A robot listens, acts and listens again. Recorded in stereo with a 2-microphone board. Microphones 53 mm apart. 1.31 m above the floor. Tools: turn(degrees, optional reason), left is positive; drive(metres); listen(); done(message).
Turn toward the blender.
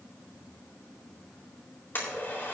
turn(degrees=40, reason="The blender: about 40° left or 140° left.")
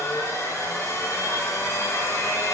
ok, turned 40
turn(degrees=100, reason="So it is at 100° left.")
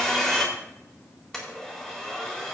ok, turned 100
turn(degrees=10, reason="The blender is now 10° left.")
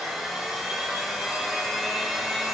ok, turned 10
done("Found it: a blender, straight ahead, 2 to 4 m away.")